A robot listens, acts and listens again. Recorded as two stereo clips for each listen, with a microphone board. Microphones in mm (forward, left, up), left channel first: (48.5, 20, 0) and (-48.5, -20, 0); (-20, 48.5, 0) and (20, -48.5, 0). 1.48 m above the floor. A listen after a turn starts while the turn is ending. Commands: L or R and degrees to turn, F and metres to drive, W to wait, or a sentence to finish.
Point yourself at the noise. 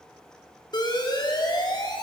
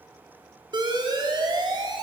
R25
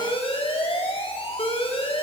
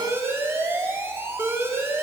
Found it: an alarm, straight ahead.